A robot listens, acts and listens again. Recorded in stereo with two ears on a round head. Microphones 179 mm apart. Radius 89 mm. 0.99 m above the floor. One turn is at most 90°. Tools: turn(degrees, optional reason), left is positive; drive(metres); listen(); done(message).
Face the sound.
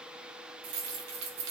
turn(degrees=-70, reason="The keys jangling: about 70° right or 110° right.")
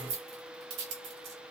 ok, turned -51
turn(degrees=-60, reason="So it is at 60° right.")
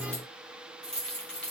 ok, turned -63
done("Facing the keys jangling.")